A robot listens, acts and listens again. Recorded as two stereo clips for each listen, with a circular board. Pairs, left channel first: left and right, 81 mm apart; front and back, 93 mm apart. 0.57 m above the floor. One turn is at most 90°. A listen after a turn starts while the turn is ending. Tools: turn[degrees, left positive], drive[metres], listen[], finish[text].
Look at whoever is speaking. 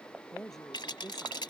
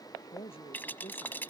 Action: finish[Found it: a woman speaking, straight ahead.]